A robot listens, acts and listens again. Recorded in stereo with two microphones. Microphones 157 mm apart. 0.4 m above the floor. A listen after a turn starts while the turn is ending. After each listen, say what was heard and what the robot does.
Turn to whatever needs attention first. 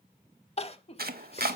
The crying: about 40° left or 140° left. Turn 40° left.
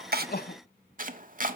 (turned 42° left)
So it is at 100° left. Turn 100° left.
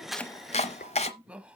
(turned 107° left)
Found it: crying, straight ahead.